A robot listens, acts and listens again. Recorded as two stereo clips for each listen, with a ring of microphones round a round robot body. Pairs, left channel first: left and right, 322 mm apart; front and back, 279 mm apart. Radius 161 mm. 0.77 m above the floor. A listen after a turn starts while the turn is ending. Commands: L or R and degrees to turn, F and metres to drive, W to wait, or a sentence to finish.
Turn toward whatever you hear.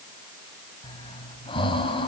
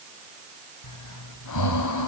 L15
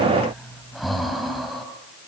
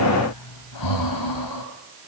Found it: breathing, straight ahead.